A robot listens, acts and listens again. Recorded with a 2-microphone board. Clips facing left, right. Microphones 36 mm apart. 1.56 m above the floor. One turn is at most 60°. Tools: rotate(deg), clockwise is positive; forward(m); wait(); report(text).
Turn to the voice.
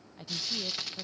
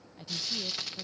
rotate(-30)
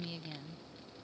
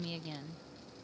rotate(20)
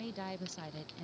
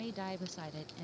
report("Found it: a woman speaking, straight ahead.")